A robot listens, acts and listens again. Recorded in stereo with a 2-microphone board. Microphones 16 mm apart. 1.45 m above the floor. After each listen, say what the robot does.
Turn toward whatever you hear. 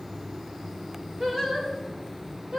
Turn 90° right.
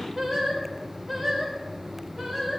Turn 15° right.
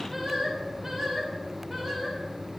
Turn 10° right.
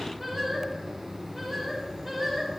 Facing the singing, over 4 m away.